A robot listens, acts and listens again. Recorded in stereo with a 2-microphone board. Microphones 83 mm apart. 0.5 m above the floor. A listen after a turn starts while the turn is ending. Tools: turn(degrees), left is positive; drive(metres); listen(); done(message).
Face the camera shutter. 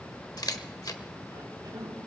turn(degrees=55)
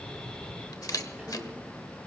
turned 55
turn(degrees=60)
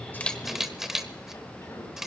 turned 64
done("Found it: a camera shutter, straight ahead, 1 to 2 m away.")